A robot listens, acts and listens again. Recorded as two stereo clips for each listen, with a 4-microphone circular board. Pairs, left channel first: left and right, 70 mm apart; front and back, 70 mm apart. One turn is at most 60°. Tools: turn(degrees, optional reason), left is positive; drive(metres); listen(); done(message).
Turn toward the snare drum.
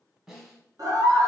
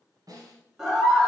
turn(degrees=-60, reason="The snare drum: 170° right.")
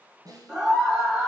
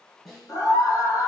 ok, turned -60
turn(degrees=-60, reason="The snare drum is now 85° right.")
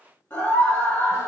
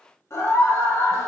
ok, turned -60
turn(degrees=-25, reason="Nothing new. It was at 25° right.")
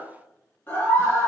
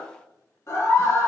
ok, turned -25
listen()
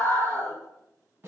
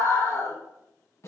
turn(degrees=-35, reason="The snare drum is now 35° right.")
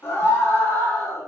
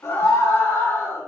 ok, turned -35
listen()
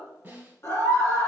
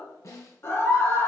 turn(degrees=-30, reason="The snare drum is now 30° right.")
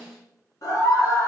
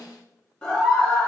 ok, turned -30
done("Facing the snare drum.")